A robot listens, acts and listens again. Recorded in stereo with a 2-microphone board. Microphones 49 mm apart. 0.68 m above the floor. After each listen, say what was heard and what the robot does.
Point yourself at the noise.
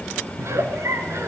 The giggle: about 60° right or 120° right. Turn 60° right.
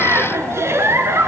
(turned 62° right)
So it is at 55° right. Turn 55° right.
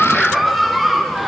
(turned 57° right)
Facing the giggle, 2 to 4 m away.